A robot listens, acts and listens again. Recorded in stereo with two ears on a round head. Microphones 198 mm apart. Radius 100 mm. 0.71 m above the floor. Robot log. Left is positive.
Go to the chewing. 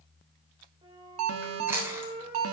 cmd yaw -30
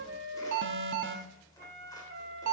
cmd idle
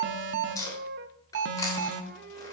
note: So it is at 15° left.
cmd yaw +15
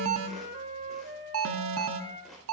cmd idle
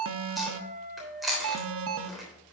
cmd fwd 1.0
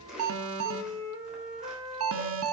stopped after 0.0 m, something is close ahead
cmd idle
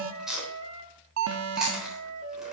end: Blocked. The chewing is further on, straight ahead.